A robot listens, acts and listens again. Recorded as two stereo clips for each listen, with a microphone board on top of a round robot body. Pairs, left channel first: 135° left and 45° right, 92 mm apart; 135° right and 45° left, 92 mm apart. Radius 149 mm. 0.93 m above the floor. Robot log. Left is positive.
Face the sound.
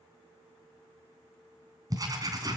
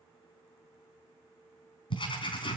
note: The writing: 100° right.
cmd yaw -100
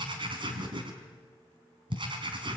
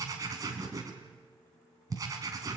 note: The writing is now 10° right.
cmd yaw -10
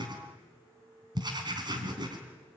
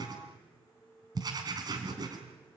end: Facing the writing, 2 to 4 m away.